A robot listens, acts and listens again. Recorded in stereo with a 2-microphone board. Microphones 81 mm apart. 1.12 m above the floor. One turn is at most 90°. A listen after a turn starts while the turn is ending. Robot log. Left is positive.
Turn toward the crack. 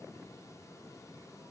cmd idle
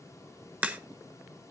note: The crack: about 20° right or 160° right.
cmd yaw -20
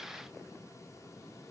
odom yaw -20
cmd idle
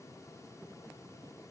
end: I heard a crack, but can't make it out now. It was about straight ahead or 140° right.